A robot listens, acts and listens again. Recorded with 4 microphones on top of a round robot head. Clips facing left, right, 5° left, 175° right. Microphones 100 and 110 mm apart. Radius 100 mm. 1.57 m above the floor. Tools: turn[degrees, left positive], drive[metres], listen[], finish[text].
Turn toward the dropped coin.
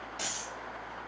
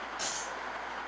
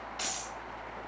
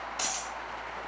Thought: The dropped coin: 140° left.
Action: turn[140]
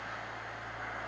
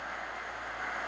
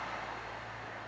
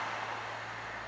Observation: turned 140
Action: finish[Facing where the dropped coin came from. I can't hear it now.]